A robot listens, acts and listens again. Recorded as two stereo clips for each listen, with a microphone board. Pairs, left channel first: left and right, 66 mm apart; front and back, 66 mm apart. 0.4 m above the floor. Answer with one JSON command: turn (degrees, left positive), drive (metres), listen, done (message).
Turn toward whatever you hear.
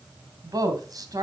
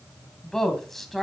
{"turn": -90}
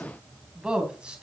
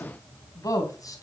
{"turn": -15}
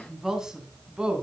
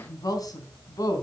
{"turn": -15}
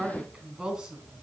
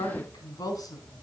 {"turn": -10}
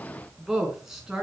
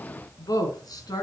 {"turn": -10}
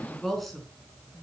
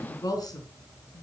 {"done": "Found it: a woman speaking, straight ahead, over 4 m away."}